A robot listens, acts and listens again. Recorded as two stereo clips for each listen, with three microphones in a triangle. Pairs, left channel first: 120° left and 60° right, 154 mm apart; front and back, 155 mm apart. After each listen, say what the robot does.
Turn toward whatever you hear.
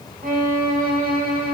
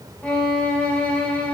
Turn 80° right.
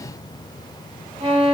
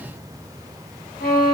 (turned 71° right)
Turn 10° right.
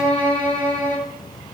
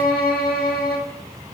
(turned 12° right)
Facing the violin.